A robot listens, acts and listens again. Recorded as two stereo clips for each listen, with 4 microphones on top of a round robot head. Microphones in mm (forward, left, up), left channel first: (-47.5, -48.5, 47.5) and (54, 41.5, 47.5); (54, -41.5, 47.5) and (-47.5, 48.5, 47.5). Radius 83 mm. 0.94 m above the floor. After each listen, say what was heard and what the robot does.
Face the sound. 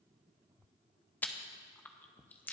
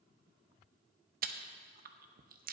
The chewing: 145° left. Turn 145° left.
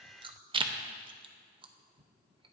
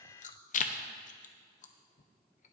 The chewing is now 10° right. Turn 10° right.
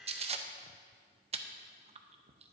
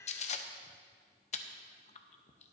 Facing the chewing.